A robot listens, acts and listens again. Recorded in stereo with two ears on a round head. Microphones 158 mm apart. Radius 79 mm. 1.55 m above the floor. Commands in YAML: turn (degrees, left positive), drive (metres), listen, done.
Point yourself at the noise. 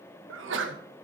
turn: -90
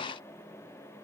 done: "I heard a sneeze from this way, but can't make it out now."